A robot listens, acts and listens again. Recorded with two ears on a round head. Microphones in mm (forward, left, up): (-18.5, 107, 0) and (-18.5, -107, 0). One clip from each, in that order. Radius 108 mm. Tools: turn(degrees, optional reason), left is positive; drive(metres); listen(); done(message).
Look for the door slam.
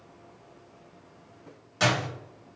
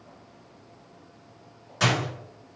turn(degrees=30)
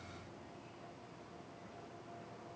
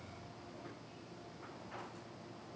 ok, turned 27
listen()
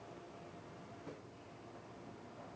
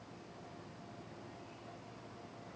done("I heard a door slam, but can't make it out now. It was about 20° right or 145° left.")